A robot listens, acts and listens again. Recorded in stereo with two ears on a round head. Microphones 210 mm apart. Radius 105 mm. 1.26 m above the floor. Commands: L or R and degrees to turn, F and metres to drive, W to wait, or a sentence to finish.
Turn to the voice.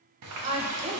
R25
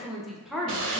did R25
Facing the woman speaking, under 1 m away.